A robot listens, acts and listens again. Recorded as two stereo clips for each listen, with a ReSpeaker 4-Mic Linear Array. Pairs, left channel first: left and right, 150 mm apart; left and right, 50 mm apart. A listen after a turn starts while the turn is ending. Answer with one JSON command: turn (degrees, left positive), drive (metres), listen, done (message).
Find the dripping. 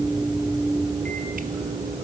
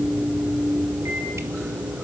{"listen": true}
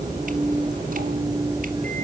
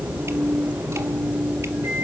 {"listen": true}
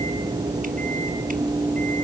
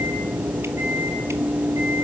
{"done": "I can't make out dripping."}